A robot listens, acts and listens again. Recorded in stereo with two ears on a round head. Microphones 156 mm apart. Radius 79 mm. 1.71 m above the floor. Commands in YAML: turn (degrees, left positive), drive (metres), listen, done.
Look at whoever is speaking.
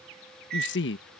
turn: 70
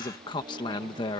turn: 25
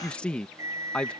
done: "Facing the man speaking."